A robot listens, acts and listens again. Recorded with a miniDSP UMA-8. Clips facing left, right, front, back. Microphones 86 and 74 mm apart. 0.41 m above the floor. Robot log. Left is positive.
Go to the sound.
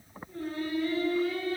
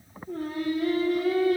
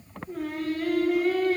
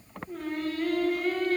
note: The singing: 85° right.
cmd yaw -85
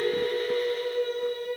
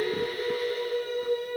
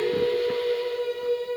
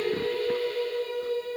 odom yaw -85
cmd fwd 1.0
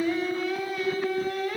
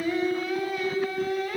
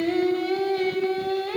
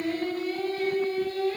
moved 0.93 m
cmd fwd 1.0
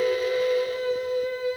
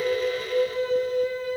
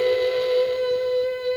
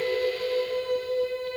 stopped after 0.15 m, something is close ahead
end: I am next to the singing.